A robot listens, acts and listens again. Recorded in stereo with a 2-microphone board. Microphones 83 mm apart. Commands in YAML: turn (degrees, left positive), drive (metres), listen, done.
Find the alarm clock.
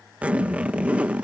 listen: true
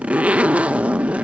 listen: true
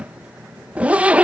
done: "I can't make out an alarm clock to turn to."